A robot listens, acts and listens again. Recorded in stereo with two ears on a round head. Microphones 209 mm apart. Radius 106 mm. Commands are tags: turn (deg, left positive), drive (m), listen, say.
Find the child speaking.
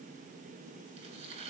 <listen/>
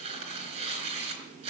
<listen/>
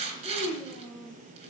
<turn deg="30"/>
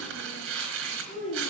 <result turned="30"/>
<turn deg="150"/>
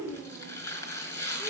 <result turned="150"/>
<say>Found it: a child speaking, straight ahead, over 4 m away.</say>